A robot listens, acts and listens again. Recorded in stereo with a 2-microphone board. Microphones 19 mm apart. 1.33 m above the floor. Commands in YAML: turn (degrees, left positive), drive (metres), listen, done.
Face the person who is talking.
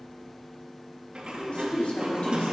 turn: 70
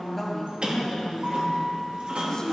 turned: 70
turn: 35
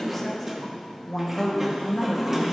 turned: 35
turn: 25
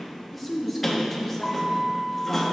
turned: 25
done: "Found it: a woman speaking, straight ahead."